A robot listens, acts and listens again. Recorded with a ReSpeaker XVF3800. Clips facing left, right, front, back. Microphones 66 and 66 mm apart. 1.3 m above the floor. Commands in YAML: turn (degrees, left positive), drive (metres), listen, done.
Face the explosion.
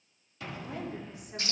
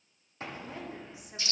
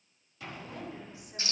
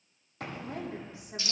turn: -140
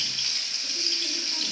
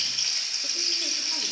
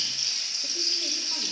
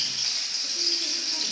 done: "Facing where the explosion came from. I can't hear it now."